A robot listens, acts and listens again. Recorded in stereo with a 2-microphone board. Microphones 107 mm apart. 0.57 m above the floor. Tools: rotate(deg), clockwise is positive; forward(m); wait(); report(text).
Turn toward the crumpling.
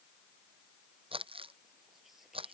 rotate(55)
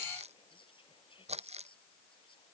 rotate(75)
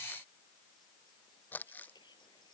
rotate(-15)
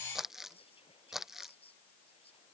report("Facing the crumpling.")